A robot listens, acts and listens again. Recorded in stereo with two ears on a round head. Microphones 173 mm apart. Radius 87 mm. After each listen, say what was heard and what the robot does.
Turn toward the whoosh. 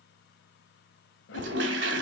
The whoosh: about 70° left or 110° left. Turn 70° left.
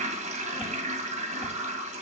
Keep listening.
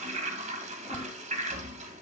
Found it: a whoosh, straight ahead, 1 to 2 m away.